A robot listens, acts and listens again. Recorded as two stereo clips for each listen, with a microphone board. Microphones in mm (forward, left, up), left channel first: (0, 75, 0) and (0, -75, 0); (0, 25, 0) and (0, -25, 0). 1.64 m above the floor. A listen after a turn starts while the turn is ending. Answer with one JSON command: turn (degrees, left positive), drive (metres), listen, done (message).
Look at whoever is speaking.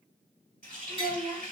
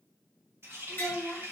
{"turn": -45}
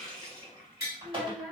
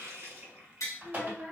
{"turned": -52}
{"done": "Facing the child speaking."}